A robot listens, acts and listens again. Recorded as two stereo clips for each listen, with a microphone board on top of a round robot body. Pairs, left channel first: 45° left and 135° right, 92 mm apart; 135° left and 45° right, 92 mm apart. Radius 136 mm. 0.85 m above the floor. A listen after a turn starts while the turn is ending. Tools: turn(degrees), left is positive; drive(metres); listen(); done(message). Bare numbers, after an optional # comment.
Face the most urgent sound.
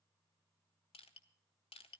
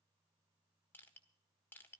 listen()
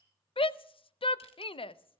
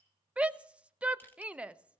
# The shout: 30° left.
turn(30)
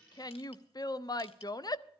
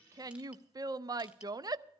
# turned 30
done("Found it: a shout, straight ahead.")